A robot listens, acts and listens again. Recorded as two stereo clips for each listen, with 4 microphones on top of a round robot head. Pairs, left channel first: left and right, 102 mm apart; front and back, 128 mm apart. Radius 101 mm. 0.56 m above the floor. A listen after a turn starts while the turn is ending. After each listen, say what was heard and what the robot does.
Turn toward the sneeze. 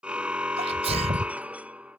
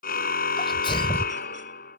The sneeze: 60° right. Turn 60° right.
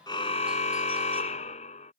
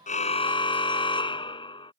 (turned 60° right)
Facing where the sneeze came from. I can't hear it now.